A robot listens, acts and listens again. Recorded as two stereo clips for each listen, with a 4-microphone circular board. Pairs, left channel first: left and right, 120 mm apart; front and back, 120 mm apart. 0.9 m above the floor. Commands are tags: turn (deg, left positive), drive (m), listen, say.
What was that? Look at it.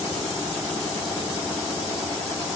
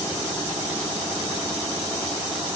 <listen/>
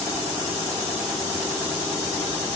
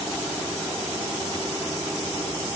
<listen/>
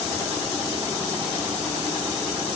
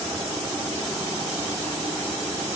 <say>I can't make out anything.</say>